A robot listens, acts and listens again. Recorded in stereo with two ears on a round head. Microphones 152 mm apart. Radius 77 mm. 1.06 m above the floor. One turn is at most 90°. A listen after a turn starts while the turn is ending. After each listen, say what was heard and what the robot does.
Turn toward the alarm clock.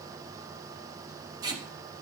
Keep listening.
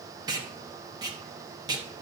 Keep listening.
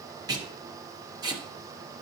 I can't make out an alarm clock to turn to.